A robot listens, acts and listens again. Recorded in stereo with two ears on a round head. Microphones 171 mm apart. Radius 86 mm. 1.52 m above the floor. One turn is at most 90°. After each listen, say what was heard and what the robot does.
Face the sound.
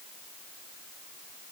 Keep listening.
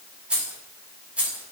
Turn 30° right.
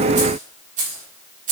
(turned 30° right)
So it is at 135° right. Turn 90° right.
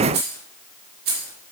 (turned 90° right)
The keys jangling is now 50° right. Turn 50° right.
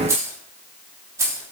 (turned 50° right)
The keys jangling is now 15° right. Turn 15° right.
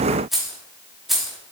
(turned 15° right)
Found it: keys jangling, straight ahead.